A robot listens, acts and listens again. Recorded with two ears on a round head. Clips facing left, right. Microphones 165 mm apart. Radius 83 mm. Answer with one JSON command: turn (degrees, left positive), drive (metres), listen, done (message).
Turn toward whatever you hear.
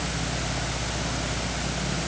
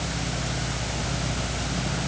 {"listen": true}
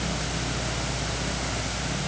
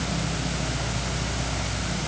{"listen": true}
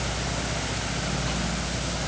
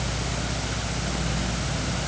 {"done": "I can't make out anything to turn to."}